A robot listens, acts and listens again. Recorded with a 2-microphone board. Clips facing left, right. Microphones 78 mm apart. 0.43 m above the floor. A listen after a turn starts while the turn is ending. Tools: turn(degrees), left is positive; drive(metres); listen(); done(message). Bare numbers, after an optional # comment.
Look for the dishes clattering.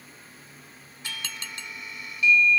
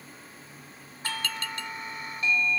# The dishes clattering: about 20° left or 160° left.
turn(20)
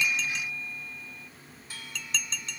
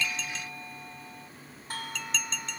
done("Found it: dishes clattering, straight ahead.")